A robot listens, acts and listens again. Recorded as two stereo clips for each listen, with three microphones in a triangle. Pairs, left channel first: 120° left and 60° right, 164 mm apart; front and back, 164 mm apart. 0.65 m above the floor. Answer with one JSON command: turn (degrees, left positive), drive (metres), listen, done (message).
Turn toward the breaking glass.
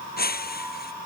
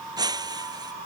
{"turn": 115}
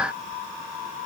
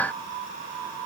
{"done": "Facing where the breaking glass came from. I can't hear it now."}